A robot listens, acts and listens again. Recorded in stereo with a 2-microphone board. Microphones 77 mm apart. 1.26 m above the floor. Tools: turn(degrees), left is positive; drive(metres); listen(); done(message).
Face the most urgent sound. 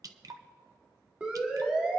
turn(degrees=-15)
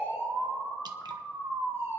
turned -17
turn(degrees=-150)
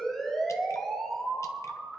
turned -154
done("Found it: a siren, straight ahead.")